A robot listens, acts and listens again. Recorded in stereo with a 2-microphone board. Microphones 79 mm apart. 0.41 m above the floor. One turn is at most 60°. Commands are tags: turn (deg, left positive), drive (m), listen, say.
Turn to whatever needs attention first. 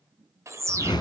<turn deg="-35"/>
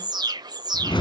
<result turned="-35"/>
<turn deg="-60"/>
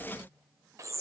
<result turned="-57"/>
<turn deg="-45"/>
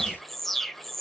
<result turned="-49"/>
<say>Facing the alarm.</say>